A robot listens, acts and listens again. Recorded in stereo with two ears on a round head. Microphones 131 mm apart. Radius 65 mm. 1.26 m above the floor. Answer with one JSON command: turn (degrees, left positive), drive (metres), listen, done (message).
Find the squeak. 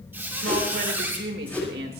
{"turn": -30}
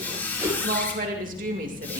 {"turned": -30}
{"turn": 15}
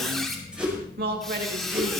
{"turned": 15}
{"done": "Facing the squeak."}